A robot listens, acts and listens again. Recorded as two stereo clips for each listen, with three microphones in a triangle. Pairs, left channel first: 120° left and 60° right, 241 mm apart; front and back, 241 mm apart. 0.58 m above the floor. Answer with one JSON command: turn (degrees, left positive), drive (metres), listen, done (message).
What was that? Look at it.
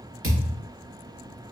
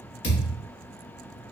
{"turn": -35}
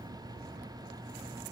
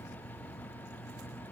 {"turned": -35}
{"done": "Facing where the thud came from. I can't hear it now."}